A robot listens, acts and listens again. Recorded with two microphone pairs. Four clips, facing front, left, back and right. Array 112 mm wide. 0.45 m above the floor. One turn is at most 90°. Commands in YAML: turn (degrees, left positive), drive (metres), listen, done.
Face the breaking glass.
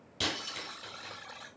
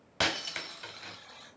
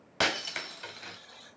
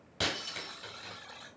turn: 90
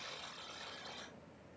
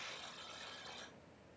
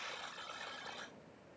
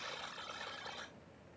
turn: 55
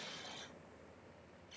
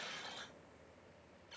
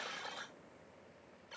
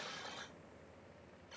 done: "I heard breaking glass from this way, but can't make it out now."